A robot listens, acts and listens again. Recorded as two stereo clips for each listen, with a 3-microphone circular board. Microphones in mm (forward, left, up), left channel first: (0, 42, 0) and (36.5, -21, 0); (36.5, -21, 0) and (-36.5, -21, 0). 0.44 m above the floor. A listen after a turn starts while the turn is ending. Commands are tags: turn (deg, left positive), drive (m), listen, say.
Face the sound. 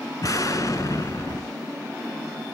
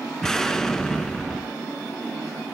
<turn deg="80"/>
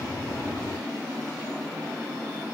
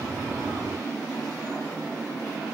<say>I heard an explosion from this way, but can't make it out now.</say>